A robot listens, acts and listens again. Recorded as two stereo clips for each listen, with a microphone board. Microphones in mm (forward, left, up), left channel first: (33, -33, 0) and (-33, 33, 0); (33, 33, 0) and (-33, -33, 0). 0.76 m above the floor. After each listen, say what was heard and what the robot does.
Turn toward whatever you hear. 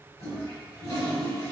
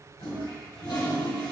The toilet flushing: 10° left. Turn 10° left.
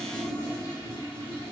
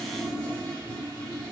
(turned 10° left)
Facing the toilet flushing, 1 to 2 m away.